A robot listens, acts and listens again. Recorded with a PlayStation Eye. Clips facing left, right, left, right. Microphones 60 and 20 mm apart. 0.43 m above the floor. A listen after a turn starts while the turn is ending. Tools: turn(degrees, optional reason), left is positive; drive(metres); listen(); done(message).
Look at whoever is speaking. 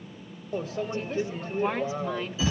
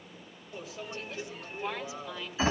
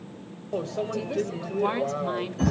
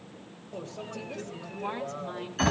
turn(degrees=45, reason="The woman speaking: about 45° left or 135° left.")
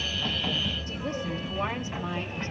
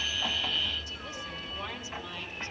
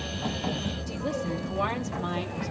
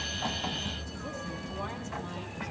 turn(degrees=45, reason="The woman speaking: about 45° left or 135° left.")
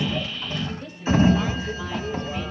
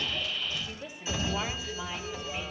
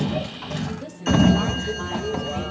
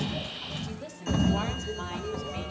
turn(degrees=-10, reason="So it is at 10° right.")
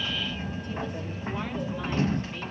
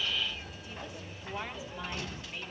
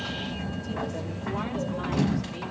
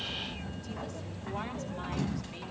listen()
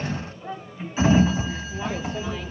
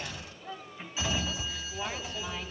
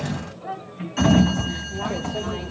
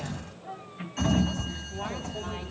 listen()
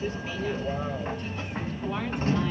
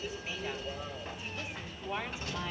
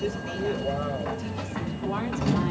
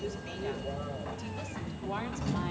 done("Facing where the woman speaking came from. I can't hear it now.")